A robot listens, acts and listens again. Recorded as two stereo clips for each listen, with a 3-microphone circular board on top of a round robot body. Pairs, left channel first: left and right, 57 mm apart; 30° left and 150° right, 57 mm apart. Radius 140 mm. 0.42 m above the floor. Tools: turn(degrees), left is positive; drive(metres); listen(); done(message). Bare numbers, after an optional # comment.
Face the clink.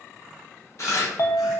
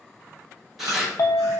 # The clink: 55° left.
turn(55)
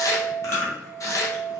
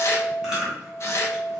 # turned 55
done("Found it: a clink, straight ahead, under 1 m away.")